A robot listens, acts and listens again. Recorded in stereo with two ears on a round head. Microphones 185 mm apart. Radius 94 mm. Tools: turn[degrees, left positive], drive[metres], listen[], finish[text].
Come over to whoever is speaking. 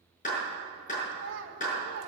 Thought: The child speaking: about 55° right or 125° right.
Action: turn[-55]
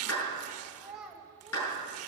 Action: drive[1.0]
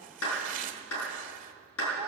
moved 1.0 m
Action: listen[]
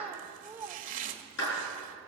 Thought: The child speaking is now 10° right.
Action: turn[-10]
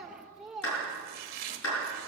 Action: drive[1.0]
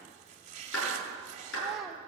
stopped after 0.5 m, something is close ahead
Action: listen[]
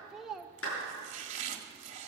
Action: finish[I am next to the child speaking.]